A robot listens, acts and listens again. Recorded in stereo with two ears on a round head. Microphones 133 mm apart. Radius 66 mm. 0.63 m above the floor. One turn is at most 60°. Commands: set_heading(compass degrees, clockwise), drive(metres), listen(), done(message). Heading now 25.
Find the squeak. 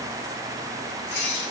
set_heading(325)
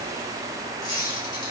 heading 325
set_heading(295)
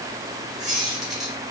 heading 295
done("Facing the squeak.")